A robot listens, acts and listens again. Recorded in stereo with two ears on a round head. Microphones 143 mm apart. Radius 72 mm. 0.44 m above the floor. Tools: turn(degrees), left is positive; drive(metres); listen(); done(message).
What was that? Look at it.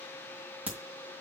turn(degrees=-30)
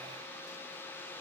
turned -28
listen()
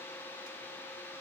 done("I heard a crack, but can't make it out now. It was about 20° left or 145° right.")